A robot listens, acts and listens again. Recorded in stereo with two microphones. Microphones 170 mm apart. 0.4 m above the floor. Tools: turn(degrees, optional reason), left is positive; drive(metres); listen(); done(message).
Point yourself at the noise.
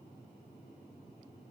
listen()
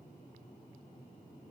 listen()
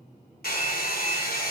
turn(degrees=70, reason="The hair dryer: about 70° left or 110° left.")
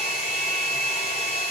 turn(degrees=40, reason="So it is at 40° left.")
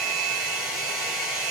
done("Found it: a hair dryer, straight ahead, 2 to 4 m away.")